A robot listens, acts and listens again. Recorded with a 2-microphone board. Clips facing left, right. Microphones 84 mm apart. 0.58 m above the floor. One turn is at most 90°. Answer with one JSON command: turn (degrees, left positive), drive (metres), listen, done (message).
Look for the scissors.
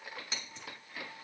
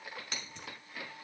{"turn": -65}
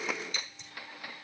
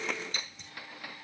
{"turn": -50}
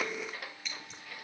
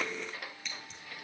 {"done": "Facing the scissors."}